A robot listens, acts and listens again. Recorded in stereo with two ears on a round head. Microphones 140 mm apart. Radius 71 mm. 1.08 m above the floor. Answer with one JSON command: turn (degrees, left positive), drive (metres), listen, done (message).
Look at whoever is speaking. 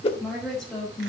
{"turn": 30}
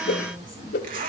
{"listen": true}
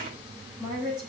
{"turn": -30}
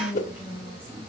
{"turn": -10}
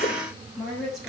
{"done": "Found it: a woman speaking, straight ahead, over 4 m away."}